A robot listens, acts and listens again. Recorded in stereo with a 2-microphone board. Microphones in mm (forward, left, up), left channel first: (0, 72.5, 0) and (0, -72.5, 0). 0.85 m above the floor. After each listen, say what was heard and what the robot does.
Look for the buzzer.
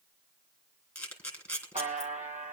The buzzer: about 55° right or 125° right. Turn 55° right.
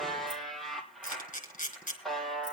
Found it: a buzzer, straight ahead.